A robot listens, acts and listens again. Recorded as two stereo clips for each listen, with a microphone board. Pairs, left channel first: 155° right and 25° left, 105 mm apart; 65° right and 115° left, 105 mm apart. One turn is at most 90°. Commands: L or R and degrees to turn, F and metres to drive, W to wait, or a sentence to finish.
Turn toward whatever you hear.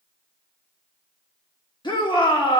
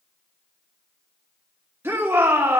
L90
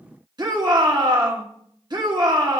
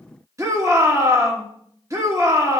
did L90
L60
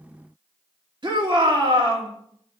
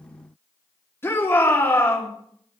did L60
Found it: a shout, straight ahead, 1 to 2 m away.